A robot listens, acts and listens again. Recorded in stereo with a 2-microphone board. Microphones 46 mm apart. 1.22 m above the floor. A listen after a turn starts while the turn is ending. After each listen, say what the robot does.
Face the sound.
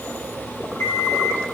Turn 90° left.
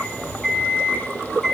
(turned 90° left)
Facing the alarm clock, over 4 m away.